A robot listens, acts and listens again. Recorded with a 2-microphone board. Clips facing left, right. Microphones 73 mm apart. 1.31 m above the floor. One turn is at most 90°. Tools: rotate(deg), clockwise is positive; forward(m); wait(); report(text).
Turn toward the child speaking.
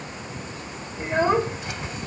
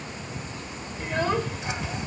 rotate(-25)
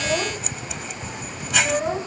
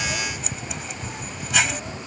rotate(-90)
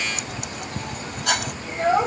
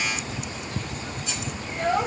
rotate(-20)
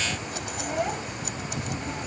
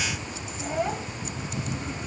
report("Facing the child speaking.")